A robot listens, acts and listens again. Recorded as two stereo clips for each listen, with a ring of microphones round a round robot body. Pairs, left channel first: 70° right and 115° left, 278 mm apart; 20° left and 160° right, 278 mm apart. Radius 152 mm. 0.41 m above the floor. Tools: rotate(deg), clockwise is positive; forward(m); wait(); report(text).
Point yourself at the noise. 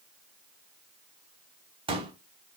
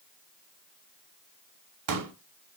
rotate(175)
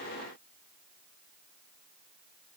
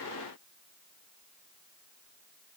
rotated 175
report("Facing where the pop came from. I can't hear it now.")